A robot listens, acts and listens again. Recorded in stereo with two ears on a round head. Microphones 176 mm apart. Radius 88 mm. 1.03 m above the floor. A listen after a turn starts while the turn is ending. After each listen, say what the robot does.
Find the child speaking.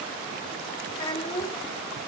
Turn 30° left.
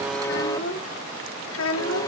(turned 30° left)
Turn 100° left.
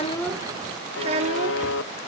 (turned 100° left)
Turn 35° right.
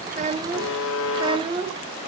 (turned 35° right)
Turn 25° right.
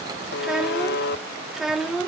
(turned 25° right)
Facing the child speaking.